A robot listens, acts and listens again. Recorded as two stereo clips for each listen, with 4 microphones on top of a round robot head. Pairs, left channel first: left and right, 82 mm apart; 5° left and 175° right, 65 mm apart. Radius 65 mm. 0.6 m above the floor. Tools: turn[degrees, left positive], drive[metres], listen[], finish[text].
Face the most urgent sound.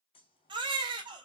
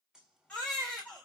Thought: The baby crying: 70° right.
Action: turn[-70]
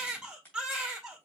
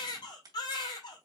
Thought: The baby crying is now 10° right.
Action: turn[-10]
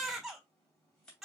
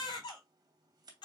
Action: finish[Found it: a baby crying, straight ahead.]